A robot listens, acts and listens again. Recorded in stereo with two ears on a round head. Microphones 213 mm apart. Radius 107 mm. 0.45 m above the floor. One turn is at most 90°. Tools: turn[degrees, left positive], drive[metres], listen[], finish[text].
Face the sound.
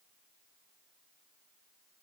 Action: listen[]
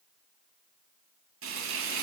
Thought: The frying: about 60° right or 120° right.
Action: turn[-60]
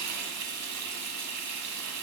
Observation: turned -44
Thought: So it is at 75° right.
Action: turn[-75]
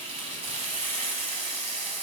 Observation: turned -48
Thought: The frying is now 25° right.
Action: turn[-25]
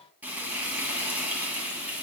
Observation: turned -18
Action: finish[Found it: frying, straight ahead.]